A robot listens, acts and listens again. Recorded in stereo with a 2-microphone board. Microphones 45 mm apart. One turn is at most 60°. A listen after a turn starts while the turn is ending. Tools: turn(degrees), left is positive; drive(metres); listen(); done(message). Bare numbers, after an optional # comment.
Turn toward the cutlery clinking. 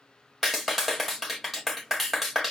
listen()
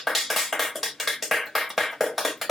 listen()
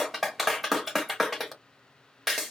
done("I can't make out cutlery clinking, only a clap.")